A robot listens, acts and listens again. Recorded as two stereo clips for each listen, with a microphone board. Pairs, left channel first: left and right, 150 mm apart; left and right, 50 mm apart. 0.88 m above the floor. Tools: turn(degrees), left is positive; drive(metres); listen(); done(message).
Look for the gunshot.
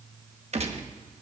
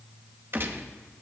turn(degrees=-45)
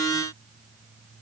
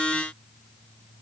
listen()
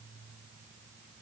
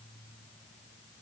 done("I heard a gunshot, but can't make it out now. It was about straight ahead or 90° right.")